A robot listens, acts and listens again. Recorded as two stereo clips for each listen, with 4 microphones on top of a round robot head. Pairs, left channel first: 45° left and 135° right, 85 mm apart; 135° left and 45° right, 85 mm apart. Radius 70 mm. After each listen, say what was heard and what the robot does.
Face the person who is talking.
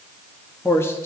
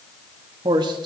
The man speaking: 15° right. Turn 15° right.
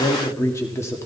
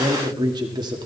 The man speaking is now 10° right. Turn 10° right.
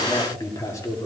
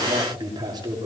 The man speaking is now 10° right. Turn 10° right.
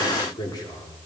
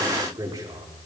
Found it: a man speaking, straight ahead, 2 to 4 m away.